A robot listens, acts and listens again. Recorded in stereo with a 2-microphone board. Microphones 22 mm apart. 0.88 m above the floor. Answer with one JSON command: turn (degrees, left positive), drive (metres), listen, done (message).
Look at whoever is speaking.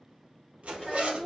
{"turn": 30}
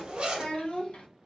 {"turn": 120}
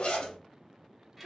{"done": "Facing the child speaking."}